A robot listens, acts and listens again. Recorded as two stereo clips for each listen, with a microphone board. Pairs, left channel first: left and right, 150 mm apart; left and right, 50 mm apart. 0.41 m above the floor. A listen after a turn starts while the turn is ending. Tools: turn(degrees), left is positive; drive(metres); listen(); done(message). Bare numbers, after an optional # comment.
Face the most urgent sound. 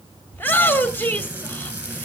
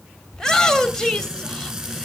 turn(30)
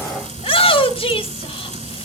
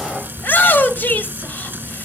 # So it is at 135° left.
turn(135)
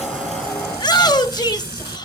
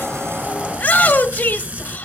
# The shout is now 35° left.
turn(35)
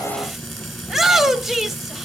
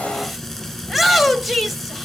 done("Facing the shout.")